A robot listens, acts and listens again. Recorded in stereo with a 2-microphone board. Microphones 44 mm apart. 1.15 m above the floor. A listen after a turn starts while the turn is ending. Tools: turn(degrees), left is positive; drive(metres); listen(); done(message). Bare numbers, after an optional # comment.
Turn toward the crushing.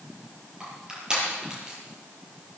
# The crushing: about 20° right or 160° right.
turn(-20)
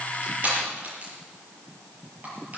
# So it is at 140° right.
turn(-140)
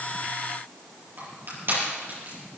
# The crushing is now 50° right.
turn(-50)
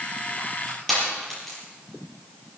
done("Found it: crushing, straight ahead, over 4 m away.")